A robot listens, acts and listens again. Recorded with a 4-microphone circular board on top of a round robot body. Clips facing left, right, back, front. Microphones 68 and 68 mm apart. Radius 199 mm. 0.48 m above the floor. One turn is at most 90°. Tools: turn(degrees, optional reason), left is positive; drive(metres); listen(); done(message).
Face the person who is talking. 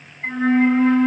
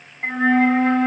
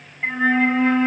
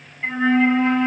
listen()
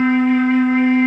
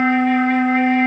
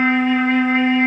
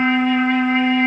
listen()
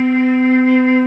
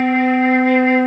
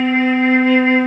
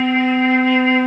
done("I can't make out anyone speaking, only a flute.")